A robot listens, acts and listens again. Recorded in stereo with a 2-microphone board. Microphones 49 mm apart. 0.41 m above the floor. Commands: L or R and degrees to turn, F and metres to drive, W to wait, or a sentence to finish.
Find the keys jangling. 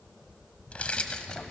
L20
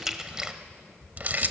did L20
R45
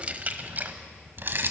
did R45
R55
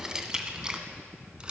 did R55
R20
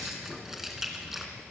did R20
Found it: keys jangling, straight ahead, 2 to 4 m away.